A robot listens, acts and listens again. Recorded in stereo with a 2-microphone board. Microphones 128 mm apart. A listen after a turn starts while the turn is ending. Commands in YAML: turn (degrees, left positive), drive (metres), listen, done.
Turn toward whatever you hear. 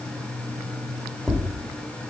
turn: 30
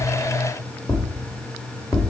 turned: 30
turn: 150
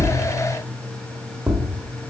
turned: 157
turn: -10
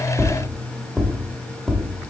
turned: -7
done: "Found it: tapping, straight ahead."